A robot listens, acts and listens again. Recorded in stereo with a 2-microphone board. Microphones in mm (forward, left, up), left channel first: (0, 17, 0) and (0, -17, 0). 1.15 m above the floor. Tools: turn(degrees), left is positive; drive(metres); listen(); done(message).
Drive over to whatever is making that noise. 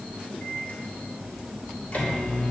turn(degrees=45)
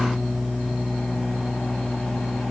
turn(degrees=90)
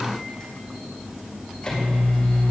turn(degrees=25)
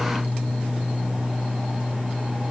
turn(degrees=-15)
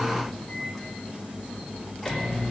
drive(metres=1.0)
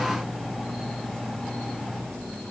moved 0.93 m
drive(metres=1.0)
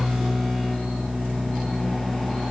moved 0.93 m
drive(metres=1.0)
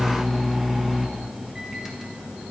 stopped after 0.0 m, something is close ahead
turn(degrees=-10)
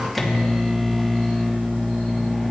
done("Arrived at the microwave, straight ahead.")